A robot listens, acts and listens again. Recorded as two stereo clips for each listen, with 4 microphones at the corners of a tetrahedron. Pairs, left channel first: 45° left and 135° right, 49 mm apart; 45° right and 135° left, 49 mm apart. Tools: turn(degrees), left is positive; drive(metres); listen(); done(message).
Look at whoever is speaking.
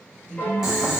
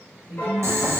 turn(degrees=45)
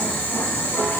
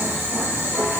listen()
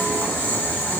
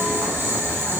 listen()
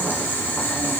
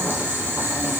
done("Facing where the woman speaking came from. I can't hear it now.")